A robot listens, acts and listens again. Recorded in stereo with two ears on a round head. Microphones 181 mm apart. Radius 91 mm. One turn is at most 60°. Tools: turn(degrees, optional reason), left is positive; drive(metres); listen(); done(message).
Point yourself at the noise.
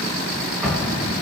turn(degrees=30)
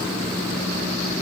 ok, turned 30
listen()
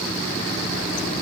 done("I heard an explosion, but can't make it out now. It was about 30° right or 150° left.")